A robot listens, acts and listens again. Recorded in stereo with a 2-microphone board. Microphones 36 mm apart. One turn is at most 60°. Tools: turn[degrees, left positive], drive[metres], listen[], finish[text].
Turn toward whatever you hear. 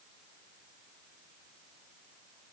Action: listen[]
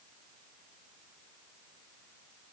Action: listen[]
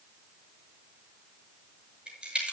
Thought: The crack: about 30° right or 150° right.
Action: turn[-30]
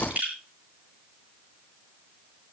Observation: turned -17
Thought: So it is at 135° right.
Action: turn[-60]
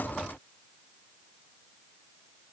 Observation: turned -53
Thought: Nothing new. It was at 85° right.
Action: turn[-60]
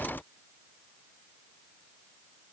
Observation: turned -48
Thought: Nothing new. It was at 35° right.
Action: turn[-35]
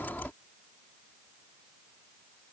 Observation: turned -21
Thought: Nothing new. It was at 15° right.
Action: turn[-15]
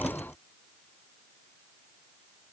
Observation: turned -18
Action: finish[Facing where the crack came from. I can't hear it now.]